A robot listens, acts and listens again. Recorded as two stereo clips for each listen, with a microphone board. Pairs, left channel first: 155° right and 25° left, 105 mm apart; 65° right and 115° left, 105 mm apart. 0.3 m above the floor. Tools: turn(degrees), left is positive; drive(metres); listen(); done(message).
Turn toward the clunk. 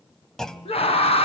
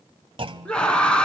turn(degrees=120)
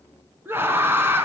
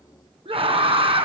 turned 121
done("I heard a clunk from this way, but can't make it out now.")